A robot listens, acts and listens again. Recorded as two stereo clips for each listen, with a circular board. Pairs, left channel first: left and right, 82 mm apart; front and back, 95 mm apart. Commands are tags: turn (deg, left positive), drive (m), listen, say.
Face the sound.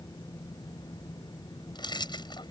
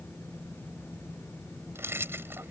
<turn deg="115"/>
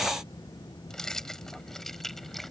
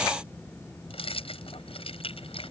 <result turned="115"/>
<say>Facing the keys jangling.</say>